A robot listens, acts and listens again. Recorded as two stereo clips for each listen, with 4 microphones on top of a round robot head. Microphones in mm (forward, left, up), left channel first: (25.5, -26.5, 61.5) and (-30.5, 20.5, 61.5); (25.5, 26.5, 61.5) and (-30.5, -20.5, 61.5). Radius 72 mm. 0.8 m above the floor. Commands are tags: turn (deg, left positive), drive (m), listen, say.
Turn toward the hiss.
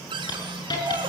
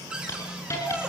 <turn deg="-10"/>
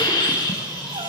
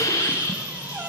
<say>Found it: a hiss, straight ahead.</say>